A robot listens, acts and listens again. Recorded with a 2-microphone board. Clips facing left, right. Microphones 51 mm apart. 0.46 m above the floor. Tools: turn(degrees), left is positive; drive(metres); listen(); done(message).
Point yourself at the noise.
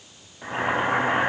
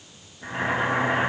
turn(degrees=50)
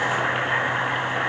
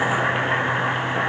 done("Facing the boiling.")